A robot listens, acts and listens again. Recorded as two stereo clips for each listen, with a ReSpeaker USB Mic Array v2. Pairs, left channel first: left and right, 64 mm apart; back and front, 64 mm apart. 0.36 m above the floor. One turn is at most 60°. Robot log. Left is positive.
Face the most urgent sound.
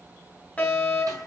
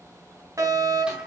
note: The fire alarm: 25° left.
cmd yaw +25
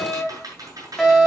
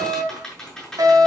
end: Found it: a fire alarm, straight ahead.